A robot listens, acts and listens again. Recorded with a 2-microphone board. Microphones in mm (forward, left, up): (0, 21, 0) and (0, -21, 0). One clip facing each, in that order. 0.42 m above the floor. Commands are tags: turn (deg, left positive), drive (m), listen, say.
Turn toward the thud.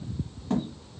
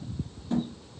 <turn deg="60"/>
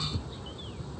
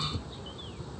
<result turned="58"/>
<listen/>
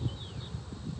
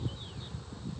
<say>I heard a thud, but can't make it out now. It was about 5° left or 60° left.</say>